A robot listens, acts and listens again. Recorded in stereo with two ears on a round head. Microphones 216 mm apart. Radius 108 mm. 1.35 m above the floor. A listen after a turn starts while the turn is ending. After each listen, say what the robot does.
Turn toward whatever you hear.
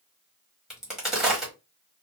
Turn 30° left.
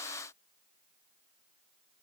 Keep listening.
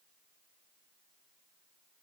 I heard a crack, but can't make it out now. It was about 30° right or 150° left.